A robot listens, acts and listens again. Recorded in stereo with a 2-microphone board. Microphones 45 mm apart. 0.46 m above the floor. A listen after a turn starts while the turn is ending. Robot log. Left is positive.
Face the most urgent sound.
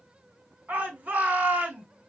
note: The shout: about 45° right or 135° right.
cmd yaw -45
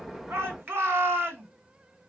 note: So it is at 85° right.
cmd yaw -85
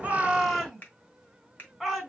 end: Facing the shout.